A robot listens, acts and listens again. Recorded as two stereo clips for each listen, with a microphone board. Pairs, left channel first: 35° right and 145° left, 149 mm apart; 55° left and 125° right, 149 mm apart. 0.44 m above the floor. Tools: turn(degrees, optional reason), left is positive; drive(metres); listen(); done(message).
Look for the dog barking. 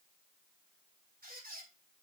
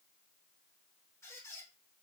listen()
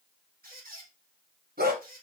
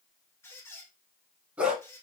turn(degrees=150, reason="The dog barking: 150° left.")
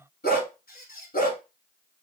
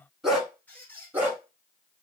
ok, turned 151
turn(degrees=-45, reason="The dog barking is now 45° right.")
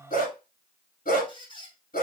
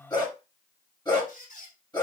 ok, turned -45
done("Facing the dog barking, 1 to 2 m away.")